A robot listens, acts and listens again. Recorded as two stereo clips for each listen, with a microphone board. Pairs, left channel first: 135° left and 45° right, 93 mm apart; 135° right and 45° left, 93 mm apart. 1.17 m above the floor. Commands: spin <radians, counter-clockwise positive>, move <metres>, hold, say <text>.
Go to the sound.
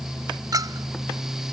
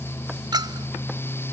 move 1.0
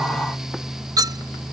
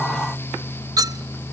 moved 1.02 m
move 1.0
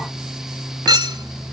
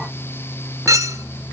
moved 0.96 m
move 1.0
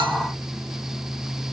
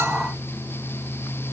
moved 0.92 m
hold
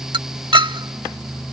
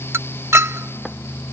spin -0.26
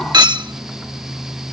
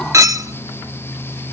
spin -0.17
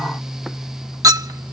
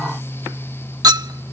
move 1.0
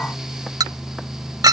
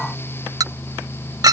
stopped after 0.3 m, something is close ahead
say I am next to the clink.